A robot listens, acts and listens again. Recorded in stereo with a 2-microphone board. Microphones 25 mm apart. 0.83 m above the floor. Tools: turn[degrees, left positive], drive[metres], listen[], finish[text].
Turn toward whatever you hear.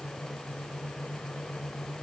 Action: listen[]
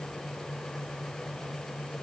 Action: listen[]
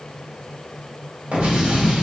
Thought: The explosion: about 65° right or 115° right.
Action: turn[-65]
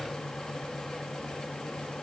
Action: listen[]
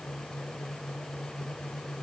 Action: finish[I heard an explosion, but can't make it out now. It was about straight ahead or 50° right.]